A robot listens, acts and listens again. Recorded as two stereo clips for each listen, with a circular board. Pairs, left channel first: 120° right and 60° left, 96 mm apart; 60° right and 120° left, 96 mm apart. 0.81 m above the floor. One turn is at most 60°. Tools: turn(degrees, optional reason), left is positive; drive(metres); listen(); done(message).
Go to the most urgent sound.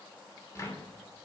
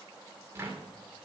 listen()
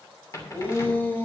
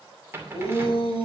turn(degrees=-50, reason="The shout: 50° right.")
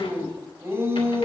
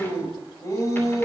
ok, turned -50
drive(metres=1.0)
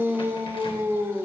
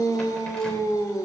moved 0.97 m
drive(metres=1.0)
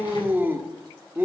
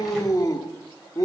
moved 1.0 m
turn(degrees=-10, reason="The shout is now 10° right.")
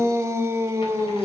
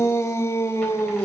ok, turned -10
drive(metres=1.0)
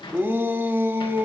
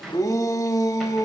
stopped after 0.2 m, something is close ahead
done("Arrived at the shout, straight ahead.")